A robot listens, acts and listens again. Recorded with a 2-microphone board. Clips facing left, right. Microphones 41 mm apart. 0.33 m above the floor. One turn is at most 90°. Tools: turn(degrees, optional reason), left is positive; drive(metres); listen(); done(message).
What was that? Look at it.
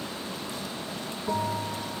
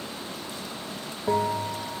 turn(degrees=-70, reason="The bell: about 70° right or 110° right.")
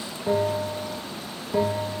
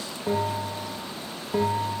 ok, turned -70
done("Found it: a bell, straight ahead.")